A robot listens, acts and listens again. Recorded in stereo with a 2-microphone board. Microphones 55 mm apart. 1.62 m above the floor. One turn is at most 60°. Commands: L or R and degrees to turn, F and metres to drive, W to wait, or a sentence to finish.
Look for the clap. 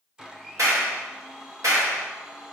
R60
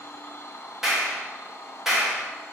Found it: a clap, straight ahead.